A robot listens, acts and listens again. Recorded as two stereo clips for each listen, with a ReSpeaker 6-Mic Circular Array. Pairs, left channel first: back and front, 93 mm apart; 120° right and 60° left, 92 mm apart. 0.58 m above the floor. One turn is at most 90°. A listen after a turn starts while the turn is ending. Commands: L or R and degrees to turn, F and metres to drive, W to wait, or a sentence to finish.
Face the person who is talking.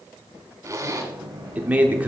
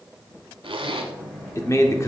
R70
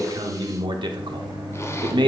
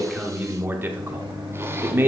Facing the man speaking.